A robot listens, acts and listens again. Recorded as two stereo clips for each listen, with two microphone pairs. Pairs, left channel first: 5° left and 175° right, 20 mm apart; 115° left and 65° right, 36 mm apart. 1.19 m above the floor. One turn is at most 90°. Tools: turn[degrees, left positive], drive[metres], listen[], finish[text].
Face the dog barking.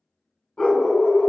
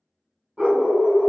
Action: finish[Found it: a dog barking, straight ahead, 1 to 2 m away.]